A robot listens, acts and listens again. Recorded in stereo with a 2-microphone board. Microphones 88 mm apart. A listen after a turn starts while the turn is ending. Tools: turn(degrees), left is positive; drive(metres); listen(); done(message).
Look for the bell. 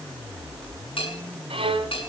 turn(degrees=75)
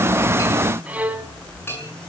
turn(degrees=25)
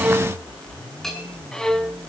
done("Found it: a bell, straight ahead, over 4 m away.")